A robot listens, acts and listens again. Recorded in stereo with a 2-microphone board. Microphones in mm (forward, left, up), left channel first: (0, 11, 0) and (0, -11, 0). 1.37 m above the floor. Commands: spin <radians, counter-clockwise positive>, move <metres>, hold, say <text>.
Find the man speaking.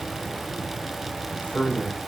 spin 1.57
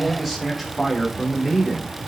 say Found it: a man speaking, straight ahead.